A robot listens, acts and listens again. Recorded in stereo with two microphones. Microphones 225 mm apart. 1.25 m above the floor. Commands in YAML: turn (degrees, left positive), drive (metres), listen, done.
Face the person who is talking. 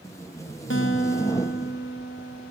listen: true
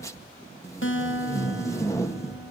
listen: true
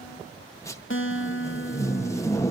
done: "I can't make out anyone speaking to turn to."